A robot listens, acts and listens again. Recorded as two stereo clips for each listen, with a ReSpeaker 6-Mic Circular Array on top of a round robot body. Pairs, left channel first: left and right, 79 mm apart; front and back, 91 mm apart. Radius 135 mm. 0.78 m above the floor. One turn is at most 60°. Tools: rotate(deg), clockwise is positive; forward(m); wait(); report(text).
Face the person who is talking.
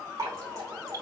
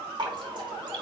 wait()
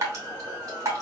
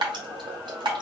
wait()
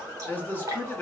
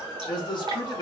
rotate(-25)
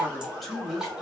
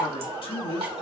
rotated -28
report("Found it: a man speaking, straight ahead.")